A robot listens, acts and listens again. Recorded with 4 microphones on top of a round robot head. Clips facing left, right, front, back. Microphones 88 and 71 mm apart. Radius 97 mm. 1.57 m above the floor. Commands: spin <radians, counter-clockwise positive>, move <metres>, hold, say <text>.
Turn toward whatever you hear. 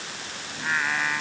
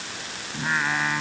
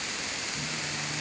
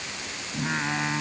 spin -2.97
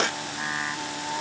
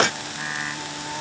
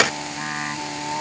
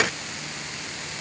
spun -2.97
spin 0.17
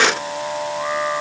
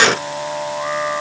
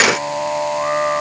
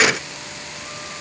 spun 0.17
say Facing the singing.